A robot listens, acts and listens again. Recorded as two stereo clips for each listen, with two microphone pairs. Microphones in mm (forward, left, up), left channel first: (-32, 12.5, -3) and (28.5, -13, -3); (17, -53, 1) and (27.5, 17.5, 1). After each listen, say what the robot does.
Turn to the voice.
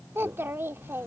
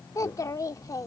Turn 70° right.
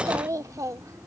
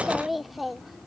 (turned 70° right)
Found it: a child speaking, straight ahead.